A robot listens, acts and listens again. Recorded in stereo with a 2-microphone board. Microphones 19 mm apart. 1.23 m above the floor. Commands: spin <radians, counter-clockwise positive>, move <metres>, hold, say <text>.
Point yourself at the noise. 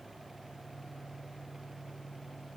hold
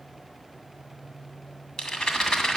spin 0.96
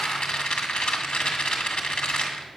spin 1.13
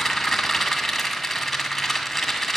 say Facing the rattle, 2 to 4 m away.